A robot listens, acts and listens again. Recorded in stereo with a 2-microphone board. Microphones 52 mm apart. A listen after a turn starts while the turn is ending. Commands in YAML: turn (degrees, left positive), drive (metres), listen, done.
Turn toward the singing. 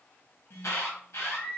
turn: 30
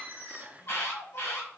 turn: 110
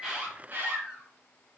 turn: -15
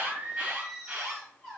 turn: -10
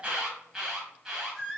done: "Found it: singing, straight ahead, 2 to 4 m away."